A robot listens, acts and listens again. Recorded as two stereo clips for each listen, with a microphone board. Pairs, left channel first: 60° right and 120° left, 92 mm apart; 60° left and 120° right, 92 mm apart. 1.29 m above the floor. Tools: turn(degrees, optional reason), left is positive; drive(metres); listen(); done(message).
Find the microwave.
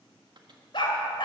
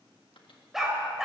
turn(degrees=85, reason="The microwave: 85° left.")
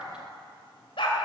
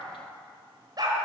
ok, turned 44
turn(degrees=45, reason="Nothing new. It was at 45° left.")
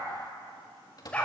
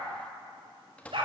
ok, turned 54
turn(degrees=-15, reason="The microwave is now 15° right.")
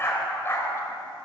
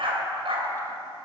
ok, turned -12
listen()
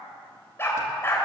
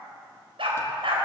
listen()
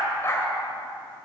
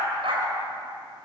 done("I heard a microwave from this way, but can't make it out now.")